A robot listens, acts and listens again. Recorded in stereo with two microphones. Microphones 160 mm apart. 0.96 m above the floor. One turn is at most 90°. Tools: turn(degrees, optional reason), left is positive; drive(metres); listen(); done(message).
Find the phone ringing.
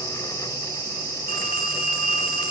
turn(degrees=-65, reason="The phone ringing: about 65° right or 115° right.")
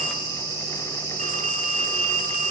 turn(degrees=-50, reason="So it is at 50° right.")
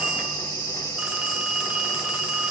done("Facing the phone ringing.")